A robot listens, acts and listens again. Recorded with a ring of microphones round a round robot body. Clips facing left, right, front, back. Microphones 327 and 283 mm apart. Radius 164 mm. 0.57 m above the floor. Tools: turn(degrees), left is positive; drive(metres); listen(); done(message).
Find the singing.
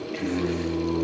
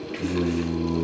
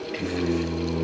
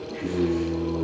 turn(degrees=-30)
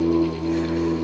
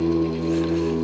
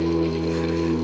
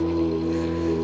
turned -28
done("Facing the singing.")